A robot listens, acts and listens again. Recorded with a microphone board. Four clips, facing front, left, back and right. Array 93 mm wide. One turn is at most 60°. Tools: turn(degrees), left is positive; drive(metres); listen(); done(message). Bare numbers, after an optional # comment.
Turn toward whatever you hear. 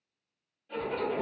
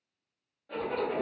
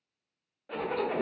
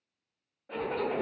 # The zipper: 165° right.
turn(-60)
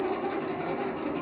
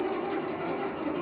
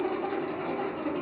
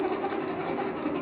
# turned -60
# The zipper is now 95° right.
turn(-60)
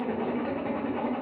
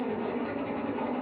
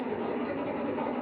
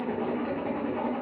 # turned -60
# The zipper is now 35° right.
turn(-35)
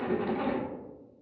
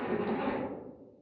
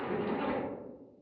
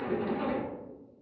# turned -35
done("Facing the zipper.")